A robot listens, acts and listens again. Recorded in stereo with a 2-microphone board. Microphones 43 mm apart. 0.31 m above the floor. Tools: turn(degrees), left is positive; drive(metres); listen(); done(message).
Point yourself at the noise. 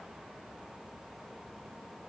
listen()
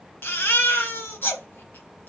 turn(degrees=55)
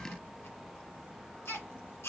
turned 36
turn(degrees=85)
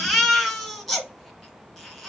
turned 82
done("Found it: a baby crying, straight ahead, 1 to 2 m away.")